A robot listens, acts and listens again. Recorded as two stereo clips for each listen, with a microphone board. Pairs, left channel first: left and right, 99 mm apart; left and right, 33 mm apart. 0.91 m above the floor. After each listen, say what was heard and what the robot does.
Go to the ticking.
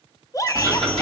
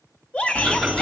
Turn 30° left.
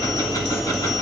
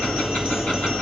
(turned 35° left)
So it is at 140° left. Turn 140° left.
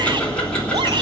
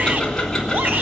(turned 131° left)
The ticking is now 10° left. Turn 10° left.
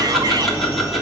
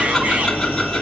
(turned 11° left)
Drive 1.0 m forward.
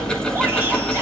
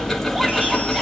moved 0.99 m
The ticking is now 10° left. Turn 10° left.
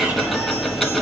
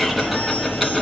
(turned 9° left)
Drive 1.0 m forward.
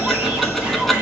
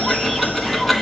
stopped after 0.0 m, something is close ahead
I am next to the ticking.